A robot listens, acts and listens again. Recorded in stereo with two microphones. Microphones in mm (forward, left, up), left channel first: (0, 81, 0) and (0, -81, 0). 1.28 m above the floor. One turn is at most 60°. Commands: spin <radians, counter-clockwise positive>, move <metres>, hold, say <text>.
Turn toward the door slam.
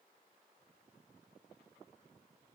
hold
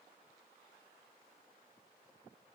hold
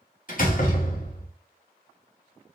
spin 0.96
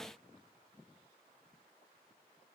hold
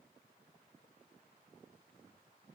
say I heard a door slam, but can't make it out now. It was about straight ahead or 70° left.